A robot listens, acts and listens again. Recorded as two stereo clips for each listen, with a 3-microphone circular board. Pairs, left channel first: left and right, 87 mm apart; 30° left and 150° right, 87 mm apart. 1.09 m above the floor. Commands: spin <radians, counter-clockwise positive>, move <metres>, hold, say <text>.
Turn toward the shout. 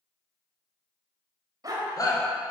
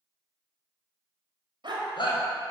spin 0.79
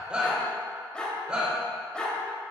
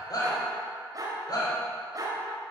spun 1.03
spin -0.17
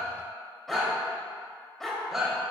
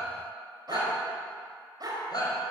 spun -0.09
say Facing the shout, 2 to 4 m away.